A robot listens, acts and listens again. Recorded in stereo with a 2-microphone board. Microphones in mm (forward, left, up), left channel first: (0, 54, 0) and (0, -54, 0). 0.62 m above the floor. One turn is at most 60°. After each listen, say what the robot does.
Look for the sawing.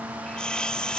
Turn 30° left.
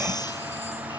Keep listening.
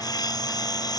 Turn 60° left.
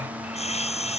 Turn 60° left.
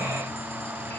Turn 25° left.
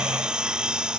Found it: sawing, straight ahead.